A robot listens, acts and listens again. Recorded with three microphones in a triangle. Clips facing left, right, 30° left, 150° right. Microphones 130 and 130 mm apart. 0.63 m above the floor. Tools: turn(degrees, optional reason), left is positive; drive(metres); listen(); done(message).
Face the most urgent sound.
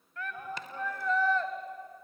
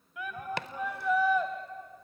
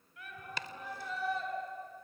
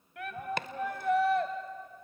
turn(degrees=-170, reason="The shout: 170° right.")
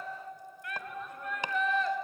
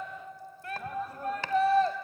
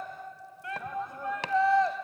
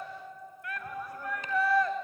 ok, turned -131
turn(degrees=-35, reason="The shout is now 35° right.")
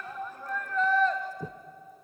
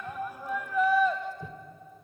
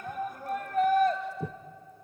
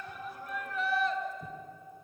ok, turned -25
turn(degrees=-10, reason="The shout is now 10° right.")
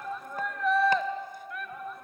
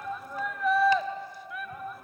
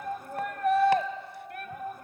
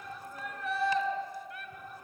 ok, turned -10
done("Found it: a shout, straight ahead, 2 to 4 m away.")